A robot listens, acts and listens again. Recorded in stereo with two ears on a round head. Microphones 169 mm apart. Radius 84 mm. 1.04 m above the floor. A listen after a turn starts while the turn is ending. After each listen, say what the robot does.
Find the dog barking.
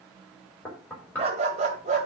Turn 40° right.
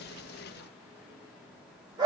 Turn 25° right.
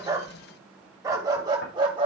Turn 25° right.
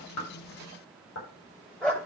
Facing the dog barking.